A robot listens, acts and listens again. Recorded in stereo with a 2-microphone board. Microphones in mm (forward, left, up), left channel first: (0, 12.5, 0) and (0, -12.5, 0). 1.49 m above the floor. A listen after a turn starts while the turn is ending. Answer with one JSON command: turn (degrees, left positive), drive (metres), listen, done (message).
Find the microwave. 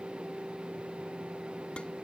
{"listen": true}
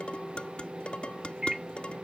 {"turn": -25}
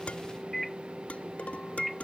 {"done": "Found it: a microwave, straight ahead."}